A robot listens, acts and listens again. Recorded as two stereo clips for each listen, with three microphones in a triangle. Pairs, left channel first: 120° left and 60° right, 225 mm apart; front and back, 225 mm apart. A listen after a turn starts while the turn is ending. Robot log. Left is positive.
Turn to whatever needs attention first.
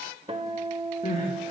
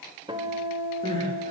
note: The crying: 65° left.
cmd yaw +65
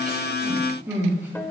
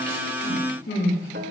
note: The crying is now 20° left.
cmd yaw +20
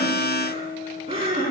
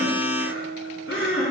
end: Found it: crying, straight ahead, over 4 m away.